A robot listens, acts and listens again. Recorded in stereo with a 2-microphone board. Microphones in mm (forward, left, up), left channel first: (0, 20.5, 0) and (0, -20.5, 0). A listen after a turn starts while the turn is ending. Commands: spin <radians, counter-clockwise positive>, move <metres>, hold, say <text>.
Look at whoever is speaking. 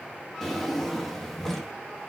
hold
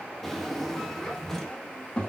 spin 0.44
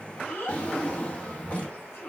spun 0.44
spin 2.01
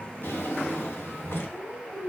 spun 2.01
spin 0.52
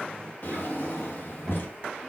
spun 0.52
spin 0.26
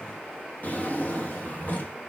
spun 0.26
hold
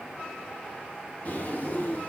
say Found it: a child speaking, straight ahead, 2 to 4 m away.